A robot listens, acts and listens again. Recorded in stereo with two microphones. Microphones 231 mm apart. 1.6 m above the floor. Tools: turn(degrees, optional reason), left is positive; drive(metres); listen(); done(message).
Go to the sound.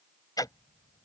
turn(degrees=15, reason="The ticking: about 15° left or 165° left.")
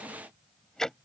drive(metres=1.0)
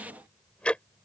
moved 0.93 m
drive(metres=1.0)
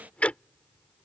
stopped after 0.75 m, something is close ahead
turn(degrees=10, reason="The ticking is now 10° left.")
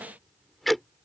done("I am next to the ticking.")